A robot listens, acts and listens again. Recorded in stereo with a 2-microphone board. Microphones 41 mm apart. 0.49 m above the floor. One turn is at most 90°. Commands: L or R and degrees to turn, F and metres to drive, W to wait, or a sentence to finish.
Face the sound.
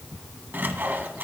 R55
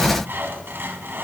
R65
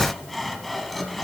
Facing the sawing, 1 to 2 m away.